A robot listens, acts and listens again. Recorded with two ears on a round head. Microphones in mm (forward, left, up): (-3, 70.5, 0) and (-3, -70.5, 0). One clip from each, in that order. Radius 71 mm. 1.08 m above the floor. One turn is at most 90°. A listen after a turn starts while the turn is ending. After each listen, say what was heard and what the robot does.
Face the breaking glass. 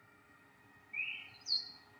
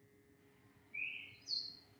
Keep listening.
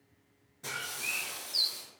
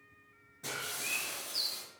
Turn 30° left.
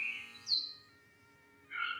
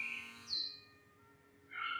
Keep listening.
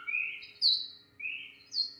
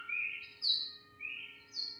I heard breaking glass, but can't make it out now. It was about 30° right or 150° left.